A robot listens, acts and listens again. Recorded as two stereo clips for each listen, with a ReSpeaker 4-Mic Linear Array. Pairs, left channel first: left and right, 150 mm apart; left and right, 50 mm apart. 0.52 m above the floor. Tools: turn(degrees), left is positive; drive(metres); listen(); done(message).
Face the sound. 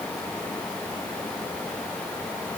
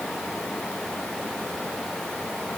listen()
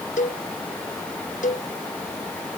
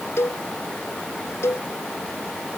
turn(degrees=60)
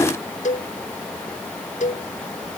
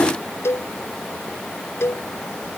turn(degrees=60)
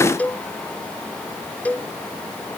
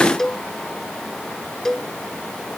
turn(degrees=10)
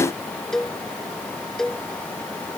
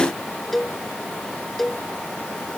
done("Found it: a cowbell, straight ahead.")